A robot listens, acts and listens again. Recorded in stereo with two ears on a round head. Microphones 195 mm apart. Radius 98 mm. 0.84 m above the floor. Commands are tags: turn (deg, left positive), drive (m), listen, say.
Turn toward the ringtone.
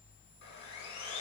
<listen/>
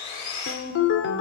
<turn deg="60"/>
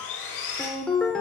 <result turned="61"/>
<say>Facing the ringtone.</say>